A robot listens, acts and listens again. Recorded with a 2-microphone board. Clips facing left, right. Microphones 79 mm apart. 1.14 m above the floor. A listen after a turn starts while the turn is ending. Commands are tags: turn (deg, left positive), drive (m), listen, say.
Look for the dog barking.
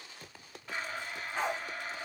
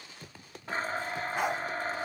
<turn deg="-30"/>
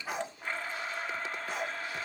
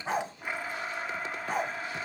<turn deg="-135"/>
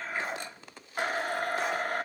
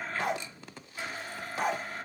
<listen/>
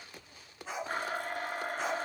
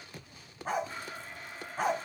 <turn deg="-45"/>
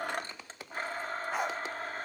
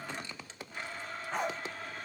<say>Found it: a dog barking, straight ahead, 2 to 4 m away.</say>